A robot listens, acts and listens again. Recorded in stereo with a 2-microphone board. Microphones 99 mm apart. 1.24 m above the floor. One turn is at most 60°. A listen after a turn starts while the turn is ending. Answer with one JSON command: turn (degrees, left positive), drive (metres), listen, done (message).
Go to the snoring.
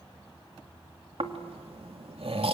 {"turn": -60}
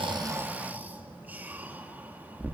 {"turn": -15}
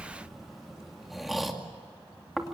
{"drive": 1.0}
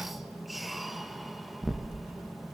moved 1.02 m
{"drive": 1.0}
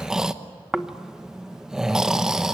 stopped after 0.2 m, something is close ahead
{"done": "I am next to the snoring."}